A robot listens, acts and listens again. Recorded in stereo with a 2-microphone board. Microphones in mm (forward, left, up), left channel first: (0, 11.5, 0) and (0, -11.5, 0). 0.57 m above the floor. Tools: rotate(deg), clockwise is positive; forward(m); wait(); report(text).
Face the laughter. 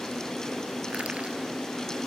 wait()
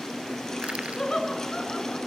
rotate(-25)
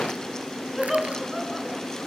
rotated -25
report("Facing the laughter, over 4 m away.")